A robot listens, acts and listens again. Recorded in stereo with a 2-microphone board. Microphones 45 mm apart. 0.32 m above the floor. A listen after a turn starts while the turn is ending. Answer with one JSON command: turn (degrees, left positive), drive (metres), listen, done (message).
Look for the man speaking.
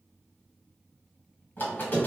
{"listen": true}
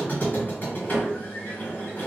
{"listen": true}
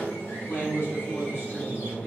{"turn": 55}
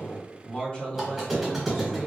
{"turn": 30}
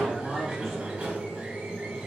{"turn": 10}
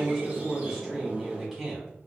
{"done": "Facing the man speaking."}